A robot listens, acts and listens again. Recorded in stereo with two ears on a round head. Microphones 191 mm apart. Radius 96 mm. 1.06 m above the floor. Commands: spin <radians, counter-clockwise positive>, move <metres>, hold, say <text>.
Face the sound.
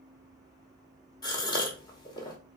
spin 0.35
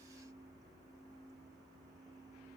hold
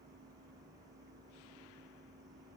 say I heard a gasp, but can't make it out now. It was about straight ahead or 140° left.